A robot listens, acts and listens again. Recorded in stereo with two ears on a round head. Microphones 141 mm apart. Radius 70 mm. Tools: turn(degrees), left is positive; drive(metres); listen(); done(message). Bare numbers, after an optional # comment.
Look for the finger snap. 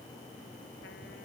listen()
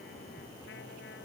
listen()
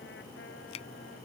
# The finger snap: about 40° left or 140° left.
turn(40)
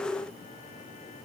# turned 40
listen()
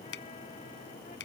# So it is at 100° left.
turn(100)
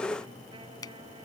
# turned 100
# The finger snap is now 25° left.
turn(25)
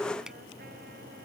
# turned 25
listen()
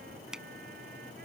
done("Facing the finger snap.")